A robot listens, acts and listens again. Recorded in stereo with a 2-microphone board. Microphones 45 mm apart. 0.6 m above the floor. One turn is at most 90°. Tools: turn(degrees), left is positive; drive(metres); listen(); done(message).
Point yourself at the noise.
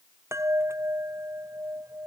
turn(degrees=-90)
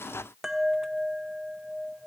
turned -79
turn(degrees=-10)
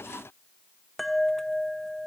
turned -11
done("Found it: a chime, straight ahead.")